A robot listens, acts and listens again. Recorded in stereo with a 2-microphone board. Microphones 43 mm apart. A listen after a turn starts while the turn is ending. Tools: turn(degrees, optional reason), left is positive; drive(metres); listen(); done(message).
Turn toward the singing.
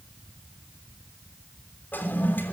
listen()
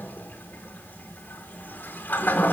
listen()
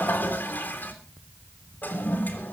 done("I can't make out singing to turn to.")